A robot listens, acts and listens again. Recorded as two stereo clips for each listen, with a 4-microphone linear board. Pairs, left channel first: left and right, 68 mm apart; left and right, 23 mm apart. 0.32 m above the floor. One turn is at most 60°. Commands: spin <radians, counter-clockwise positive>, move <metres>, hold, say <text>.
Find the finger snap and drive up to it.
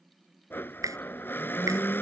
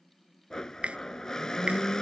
spin -1.05
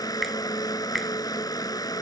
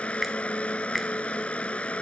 move 1.0
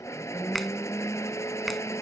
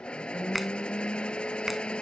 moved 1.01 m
move 1.0
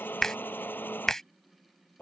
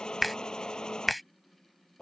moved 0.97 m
spin 0.17
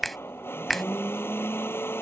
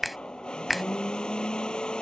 move 1.0
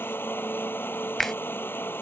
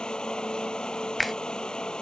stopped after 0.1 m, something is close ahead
say I am next to the finger snap.